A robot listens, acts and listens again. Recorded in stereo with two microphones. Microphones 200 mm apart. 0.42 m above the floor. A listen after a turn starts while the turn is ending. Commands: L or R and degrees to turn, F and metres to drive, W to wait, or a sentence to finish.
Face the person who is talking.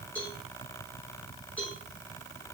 W
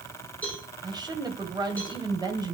R20
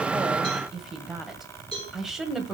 Facing the woman speaking.